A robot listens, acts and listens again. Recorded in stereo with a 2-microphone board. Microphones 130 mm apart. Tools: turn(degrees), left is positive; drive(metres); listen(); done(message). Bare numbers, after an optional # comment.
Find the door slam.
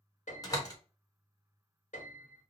# The door slam: about 25° left or 155° left.
turn(25)
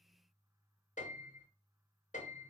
listen()
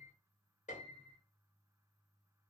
done("I heard a door slam, but can't make it out now. It was about straight ahead or 130° left.")